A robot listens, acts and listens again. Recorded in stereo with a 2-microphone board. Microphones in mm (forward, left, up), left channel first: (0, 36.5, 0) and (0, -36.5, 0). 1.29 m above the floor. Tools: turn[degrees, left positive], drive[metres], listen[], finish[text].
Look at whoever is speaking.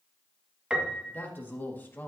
Thought: The man speaking: about 25° left or 155° left.
Action: turn[25]
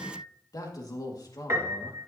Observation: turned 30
Thought: So it is at 125° left.
Action: turn[125]
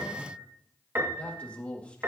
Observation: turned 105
Thought: The man speaking is now 20° left.
Action: turn[20]
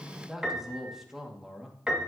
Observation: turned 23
Action: finish[Found it: a man speaking, straight ahead.]